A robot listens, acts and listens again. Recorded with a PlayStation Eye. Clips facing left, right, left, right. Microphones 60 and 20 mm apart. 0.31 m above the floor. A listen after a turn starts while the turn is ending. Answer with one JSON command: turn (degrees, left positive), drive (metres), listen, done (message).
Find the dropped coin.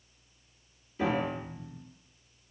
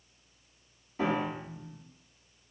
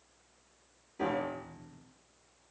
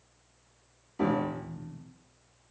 {"listen": true}
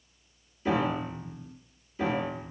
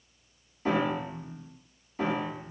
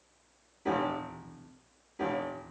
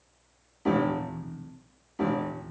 {"listen": true}
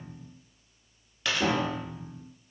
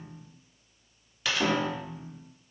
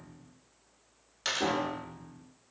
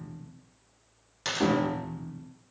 {"turn": -30}
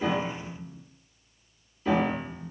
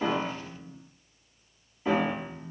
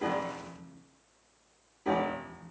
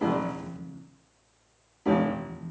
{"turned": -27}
{"listen": true}
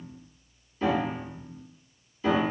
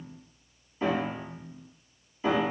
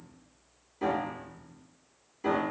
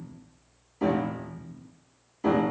{"done": "I heard a dropped coin, but can't make it out now. It was about 25° left or 150° right."}